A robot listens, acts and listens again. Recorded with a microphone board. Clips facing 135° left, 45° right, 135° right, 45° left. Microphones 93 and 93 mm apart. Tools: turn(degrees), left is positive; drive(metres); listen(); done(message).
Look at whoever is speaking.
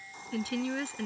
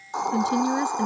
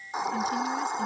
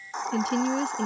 turn(degrees=25)
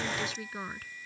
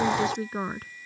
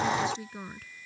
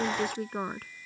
turn(degrees=10)
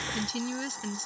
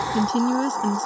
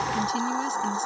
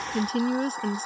done("Found it: a woman speaking, straight ahead.")